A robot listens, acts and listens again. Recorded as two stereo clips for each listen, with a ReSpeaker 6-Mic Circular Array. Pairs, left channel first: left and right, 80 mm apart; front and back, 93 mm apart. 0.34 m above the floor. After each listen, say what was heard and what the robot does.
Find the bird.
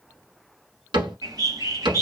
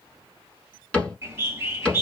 The bird: 120° right. Turn 120° right.
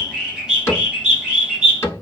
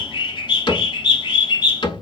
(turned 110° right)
The bird is now 10° right. Turn 10° right.
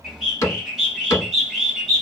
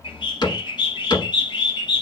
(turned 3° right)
Facing the bird, 1 to 2 m away.